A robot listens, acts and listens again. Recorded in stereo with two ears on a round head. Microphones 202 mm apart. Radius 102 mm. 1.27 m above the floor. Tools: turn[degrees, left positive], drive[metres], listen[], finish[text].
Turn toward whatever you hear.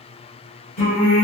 Thought: The singing: about 40° left or 140° left.
Action: turn[40]
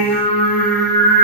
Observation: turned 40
Thought: The singing: about 40° left or 140° left.
Action: turn[40]
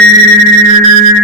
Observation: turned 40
Thought: So it is at 10° right.
Action: turn[-10]
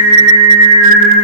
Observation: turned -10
Thought: The singing is now 20° right.
Action: turn[-20]
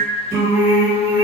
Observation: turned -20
Thought: The singing is now 20° right.
Action: turn[-20]
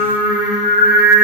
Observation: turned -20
Thought: The singing is now 10° right.
Action: turn[-10]
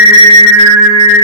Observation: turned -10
Action: finish[Found it: singing, straight ahead, 1 to 2 m away.]